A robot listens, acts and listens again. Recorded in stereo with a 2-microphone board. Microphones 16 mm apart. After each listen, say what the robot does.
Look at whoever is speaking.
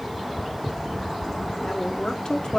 Turn 65° left.
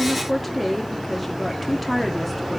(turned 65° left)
Facing the woman speaking.